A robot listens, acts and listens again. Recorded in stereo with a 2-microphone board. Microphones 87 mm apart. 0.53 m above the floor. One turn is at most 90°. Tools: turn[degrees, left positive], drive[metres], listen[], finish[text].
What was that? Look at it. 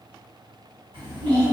Thought: The child speaking: about 60° right or 120° right.
Action: turn[-60]
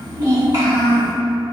Thought: So it is at 50° right.
Action: turn[-50]
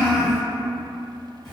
Action: finish[Facing the child speaking, 1 to 2 m away.]